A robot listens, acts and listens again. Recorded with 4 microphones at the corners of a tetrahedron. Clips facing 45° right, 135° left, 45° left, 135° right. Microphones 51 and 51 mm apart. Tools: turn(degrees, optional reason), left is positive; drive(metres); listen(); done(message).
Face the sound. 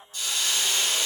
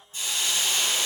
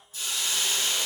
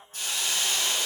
turn(degrees=-170, reason="The hiss: 170° right.")
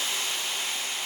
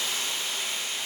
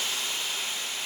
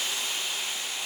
turn(degrees=-60, reason="The hiss is now 60° right.")
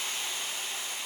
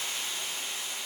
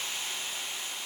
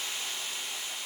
turn(degrees=-15, reason="The hiss is now 15° right.")
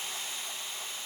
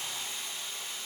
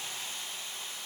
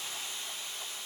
done("Found it: a hiss, straight ahead, 2 to 4 m away.")